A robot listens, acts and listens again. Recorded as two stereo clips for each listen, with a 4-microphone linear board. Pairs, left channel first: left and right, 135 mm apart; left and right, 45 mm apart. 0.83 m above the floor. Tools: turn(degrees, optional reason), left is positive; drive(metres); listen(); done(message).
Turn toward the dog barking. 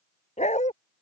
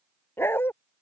turn(degrees=60, reason="The dog barking: about 60° left or 120° left.")
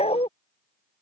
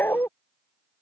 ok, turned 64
turn(degrees=50, reason="So it is at 50° left.")
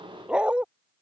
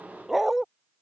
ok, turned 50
turn(degrees=-10, reason="The dog barking is now 10° right.")
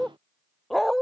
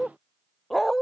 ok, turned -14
done("Found it: a dog barking, straight ahead.")